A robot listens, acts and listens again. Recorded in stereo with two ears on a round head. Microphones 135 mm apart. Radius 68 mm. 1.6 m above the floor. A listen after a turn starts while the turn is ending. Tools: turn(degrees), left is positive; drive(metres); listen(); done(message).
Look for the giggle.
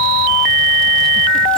listen()
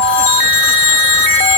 listen()
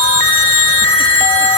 done("I can't make out a giggle to turn to.")